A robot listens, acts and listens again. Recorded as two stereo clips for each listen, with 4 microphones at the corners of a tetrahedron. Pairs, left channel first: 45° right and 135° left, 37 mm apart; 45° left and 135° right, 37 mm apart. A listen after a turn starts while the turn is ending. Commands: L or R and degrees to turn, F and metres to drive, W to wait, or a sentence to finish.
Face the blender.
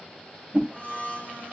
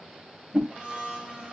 R75
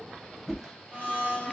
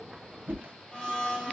R20
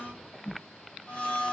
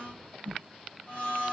Facing the blender.